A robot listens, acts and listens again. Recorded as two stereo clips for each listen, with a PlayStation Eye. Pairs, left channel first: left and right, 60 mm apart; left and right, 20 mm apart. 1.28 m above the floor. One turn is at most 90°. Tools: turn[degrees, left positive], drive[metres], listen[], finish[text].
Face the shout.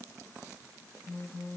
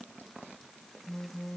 Action: listen[]
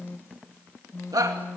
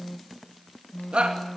Action: turn[-90]
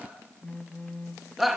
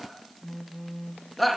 Action: finish[Found it: a shout, straight ahead.]